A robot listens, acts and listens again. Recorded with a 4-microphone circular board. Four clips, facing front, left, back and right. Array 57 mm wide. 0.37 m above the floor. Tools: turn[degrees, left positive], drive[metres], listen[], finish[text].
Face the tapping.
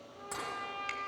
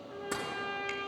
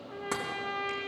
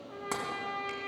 Thought: The tapping: 130° right.
Action: turn[-130]
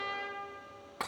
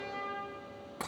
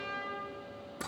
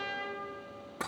Thought: The tapping is now 10° left.
Action: turn[10]
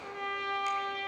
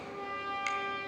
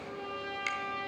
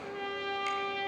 Action: listen[]
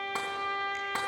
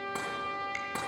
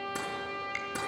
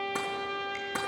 Action: listen[]
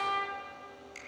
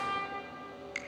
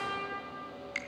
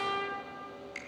Action: finish[Facing where the tapping came from. I can't hear it now.]